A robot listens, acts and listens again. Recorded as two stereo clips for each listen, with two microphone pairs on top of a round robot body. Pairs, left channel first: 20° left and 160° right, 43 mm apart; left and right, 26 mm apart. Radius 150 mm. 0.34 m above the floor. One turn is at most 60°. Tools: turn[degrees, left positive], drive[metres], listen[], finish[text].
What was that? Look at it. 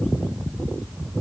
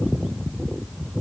Action: listen[]
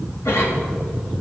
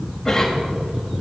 Thought: The cough: 20° left.
Action: turn[20]
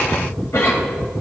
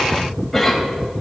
Action: finish[Found it: a cough, straight ahead.]